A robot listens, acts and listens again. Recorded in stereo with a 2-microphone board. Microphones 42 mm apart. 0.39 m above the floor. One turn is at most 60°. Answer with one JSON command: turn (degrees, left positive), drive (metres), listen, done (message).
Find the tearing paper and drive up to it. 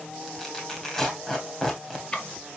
{"turn": 30}
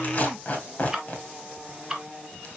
{"turn": 60}
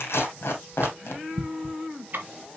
{"turn": 60}
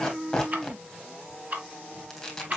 {"turn": 10}
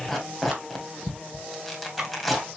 {"drive": 1.0}
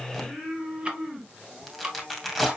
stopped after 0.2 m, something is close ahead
{"done": "Blocked. The tearing paper is further on, straight ahead."}